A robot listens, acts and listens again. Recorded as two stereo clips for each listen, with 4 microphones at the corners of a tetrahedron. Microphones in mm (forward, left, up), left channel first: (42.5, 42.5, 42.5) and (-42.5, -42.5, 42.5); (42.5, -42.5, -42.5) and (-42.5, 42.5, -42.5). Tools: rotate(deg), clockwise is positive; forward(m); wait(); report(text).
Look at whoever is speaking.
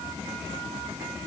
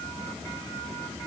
wait()
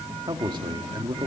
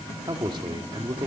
rotate(-180)
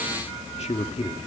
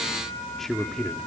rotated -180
rotate(-45)
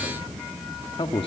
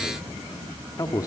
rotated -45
rotate(-10)
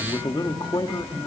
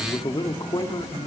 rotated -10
report("Facing the man speaking, 1 to 2 m away.")